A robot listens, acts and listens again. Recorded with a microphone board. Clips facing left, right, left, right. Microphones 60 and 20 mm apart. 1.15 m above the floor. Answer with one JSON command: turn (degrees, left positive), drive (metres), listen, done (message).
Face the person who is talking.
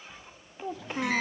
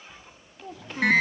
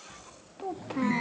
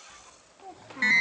{"turn": 20}
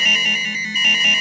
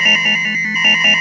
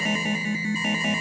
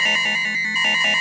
{"listen": true}
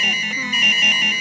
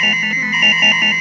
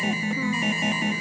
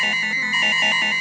{"listen": true}
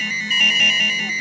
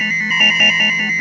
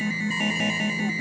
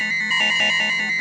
{"done": "I heard a child speaking, but can't make it out now. It was about straight ahead or 140° left."}